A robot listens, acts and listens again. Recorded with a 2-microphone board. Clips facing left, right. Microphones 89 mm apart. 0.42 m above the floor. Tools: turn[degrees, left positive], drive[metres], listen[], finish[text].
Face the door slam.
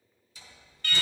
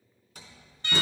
Thought: The door slam: about 55° right or 125° right.
Action: turn[-55]
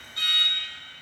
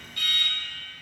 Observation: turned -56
Action: listen[]
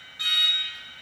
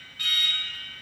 Action: finish[I heard a door slam, but can't make it out now. It was about straight ahead or 65° right.]